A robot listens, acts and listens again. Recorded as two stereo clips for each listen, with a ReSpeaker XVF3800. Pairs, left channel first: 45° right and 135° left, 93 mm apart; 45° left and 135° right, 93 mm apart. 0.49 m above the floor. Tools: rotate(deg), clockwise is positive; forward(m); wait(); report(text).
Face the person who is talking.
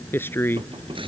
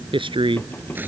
rotate(110)
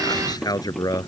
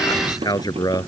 report("Found it: a man speaking, straight ahead.")